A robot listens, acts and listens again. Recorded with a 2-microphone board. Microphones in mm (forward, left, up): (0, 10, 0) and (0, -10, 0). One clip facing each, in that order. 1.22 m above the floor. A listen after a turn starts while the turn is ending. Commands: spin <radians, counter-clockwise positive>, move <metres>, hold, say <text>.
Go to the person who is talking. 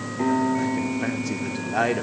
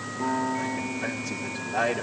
spin 0.44
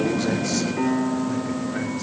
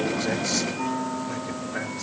hold
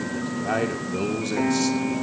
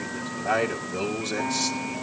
move 1.0
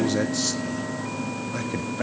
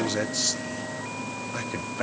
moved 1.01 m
move 1.0
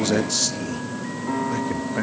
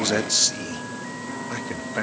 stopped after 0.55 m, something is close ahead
spin -0.17
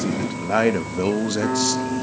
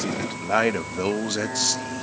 say I am next to the man speaking.